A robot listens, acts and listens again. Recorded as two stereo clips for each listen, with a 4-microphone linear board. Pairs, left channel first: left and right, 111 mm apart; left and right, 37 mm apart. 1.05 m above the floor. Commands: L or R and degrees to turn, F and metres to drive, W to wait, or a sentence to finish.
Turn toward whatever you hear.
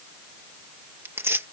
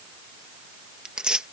R20
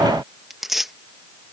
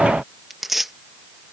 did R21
Found it: tearing paper, straight ahead.